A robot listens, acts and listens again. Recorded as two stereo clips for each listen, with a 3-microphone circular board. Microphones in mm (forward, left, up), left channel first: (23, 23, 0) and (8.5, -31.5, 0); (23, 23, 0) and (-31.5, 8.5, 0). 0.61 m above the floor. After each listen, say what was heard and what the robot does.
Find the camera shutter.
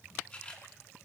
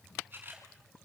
The camera shutter: 140° left. Turn 140° left.
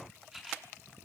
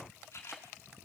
The camera shutter is now 25° right. Turn 25° right.
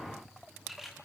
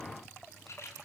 The camera shutter is now 25° right. Turn 25° right.
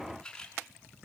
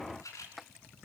Facing the camera shutter, over 4 m away.